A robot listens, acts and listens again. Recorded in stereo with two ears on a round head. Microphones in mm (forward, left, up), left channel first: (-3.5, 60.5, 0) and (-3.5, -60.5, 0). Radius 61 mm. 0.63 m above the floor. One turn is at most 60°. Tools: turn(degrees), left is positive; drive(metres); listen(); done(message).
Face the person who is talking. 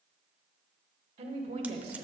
turn(degrees=-50)
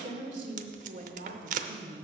turn(degrees=-60)
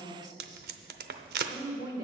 turn(degrees=-35)
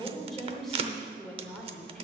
done("Facing the woman speaking, 2 to 4 m away.")